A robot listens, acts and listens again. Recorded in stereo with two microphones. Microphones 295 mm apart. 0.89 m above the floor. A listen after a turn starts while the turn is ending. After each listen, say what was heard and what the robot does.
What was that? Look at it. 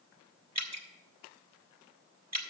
The dripping: about 60° right or 120° right. Turn 60° right.
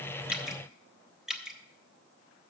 Found it: dripping, straight ahead.